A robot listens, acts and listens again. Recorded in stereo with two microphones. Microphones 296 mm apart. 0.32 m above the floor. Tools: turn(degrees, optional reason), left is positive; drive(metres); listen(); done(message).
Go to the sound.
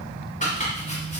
turn(degrees=25, reason="The chopping: about 25° left or 155° left.")
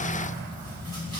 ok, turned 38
listen()
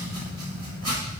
turn(degrees=115, reason="So it is at 115° left.")
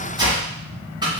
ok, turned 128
turn(degrees=-15, reason="The chopping is now 15° right.")
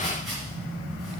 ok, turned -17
listen()
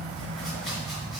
listen()
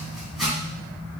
drive(metres=1.0)
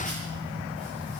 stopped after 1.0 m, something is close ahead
listen()
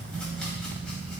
listen()
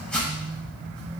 done("Arrived at the chopping, straight ahead.")